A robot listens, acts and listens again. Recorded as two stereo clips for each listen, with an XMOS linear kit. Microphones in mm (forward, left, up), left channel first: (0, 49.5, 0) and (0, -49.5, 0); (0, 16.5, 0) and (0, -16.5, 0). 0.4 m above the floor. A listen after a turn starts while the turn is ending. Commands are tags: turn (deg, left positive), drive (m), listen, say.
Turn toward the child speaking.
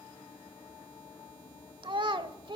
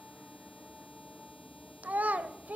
<turn deg="-55"/>
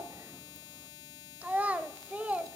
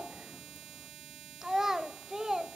<turn deg="-15"/>
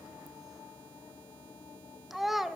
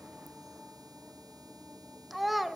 <say>Facing the child speaking.</say>